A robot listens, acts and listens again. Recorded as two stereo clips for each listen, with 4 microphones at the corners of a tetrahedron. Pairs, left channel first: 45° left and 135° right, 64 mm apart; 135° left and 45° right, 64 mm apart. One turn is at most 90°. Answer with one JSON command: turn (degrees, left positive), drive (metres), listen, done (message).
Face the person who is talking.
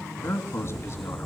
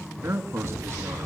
{"done": "Facing the man speaking."}